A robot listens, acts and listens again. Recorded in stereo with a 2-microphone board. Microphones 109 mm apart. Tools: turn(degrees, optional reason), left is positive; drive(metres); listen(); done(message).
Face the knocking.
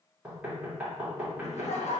turn(degrees=-30)
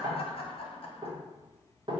turn(degrees=-135, reason="So it is at 135° right.")
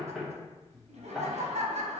done("Facing the knocking, 1 to 2 m away.")